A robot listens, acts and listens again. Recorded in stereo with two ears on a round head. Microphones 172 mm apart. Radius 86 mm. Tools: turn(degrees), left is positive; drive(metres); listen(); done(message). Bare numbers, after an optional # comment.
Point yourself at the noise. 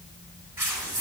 turn(-30)
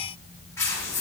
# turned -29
# So it is at 15° left.
turn(15)
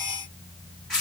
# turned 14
done("Found it: tearing paper, straight ahead.")